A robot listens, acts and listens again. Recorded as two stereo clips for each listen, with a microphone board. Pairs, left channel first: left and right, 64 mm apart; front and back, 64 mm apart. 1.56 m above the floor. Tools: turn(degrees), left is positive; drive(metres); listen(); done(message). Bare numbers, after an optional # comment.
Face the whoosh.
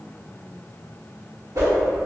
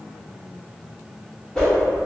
# The whoosh: 75° right.
turn(-75)
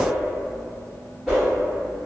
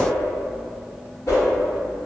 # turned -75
# The whoosh is now 10° right.
turn(-10)
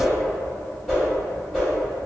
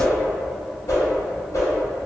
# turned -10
done("Found it: a whoosh, straight ahead.")